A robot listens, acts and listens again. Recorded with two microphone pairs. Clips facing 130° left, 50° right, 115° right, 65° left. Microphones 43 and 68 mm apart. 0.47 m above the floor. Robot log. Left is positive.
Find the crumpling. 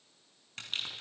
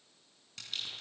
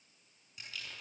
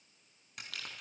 note: The crumpling: 85° left.
cmd yaw +85
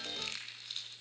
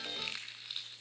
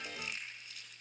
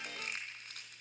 note: The crumpling is now 25° left.
cmd yaw +25
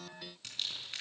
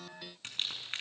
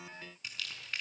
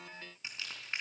end: Found it: crumpling, straight ahead.